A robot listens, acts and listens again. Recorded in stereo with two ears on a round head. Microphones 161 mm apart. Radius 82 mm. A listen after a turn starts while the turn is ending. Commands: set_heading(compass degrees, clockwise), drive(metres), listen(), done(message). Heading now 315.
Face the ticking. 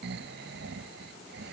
listen()
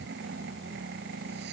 listen()
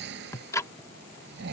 set_heading(300)
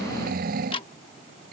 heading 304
set_heading(154)
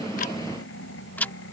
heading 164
set_heading(154)
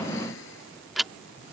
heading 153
done("Found it: ticking, straight ahead.")